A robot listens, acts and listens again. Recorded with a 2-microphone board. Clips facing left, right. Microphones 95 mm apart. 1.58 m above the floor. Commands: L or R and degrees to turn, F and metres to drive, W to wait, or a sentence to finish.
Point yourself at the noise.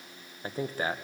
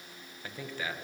L40
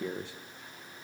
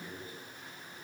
L95
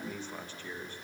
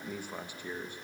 R15
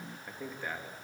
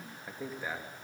R10
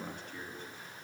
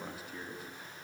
Facing the man speaking.